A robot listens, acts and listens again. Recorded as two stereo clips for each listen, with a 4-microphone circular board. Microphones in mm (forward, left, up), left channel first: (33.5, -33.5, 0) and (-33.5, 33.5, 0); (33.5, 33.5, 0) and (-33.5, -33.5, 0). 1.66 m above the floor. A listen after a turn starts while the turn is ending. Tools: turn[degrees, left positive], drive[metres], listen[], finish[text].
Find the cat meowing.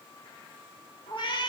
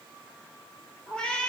Thought: The cat meowing: 35° right.
Action: turn[-35]
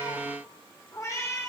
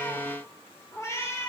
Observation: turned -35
Action: finish[Found it: a cat meowing, straight ahead, 1 to 2 m away.]